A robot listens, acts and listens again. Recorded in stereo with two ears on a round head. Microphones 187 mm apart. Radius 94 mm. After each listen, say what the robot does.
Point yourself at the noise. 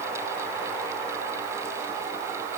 Keep listening.
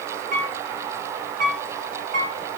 Turn 40° right.
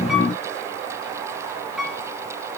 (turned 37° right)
Facing the piano, 1 to 2 m away.